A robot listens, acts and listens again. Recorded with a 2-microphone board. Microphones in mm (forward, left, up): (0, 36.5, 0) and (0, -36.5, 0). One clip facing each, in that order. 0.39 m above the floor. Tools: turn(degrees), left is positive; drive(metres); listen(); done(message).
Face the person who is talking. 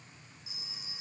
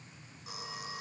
listen()
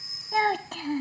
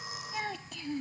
turn(degrees=65)
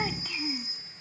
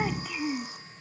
turn(degrees=-10)
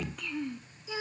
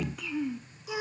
done("Found it: a child speaking, straight ahead.")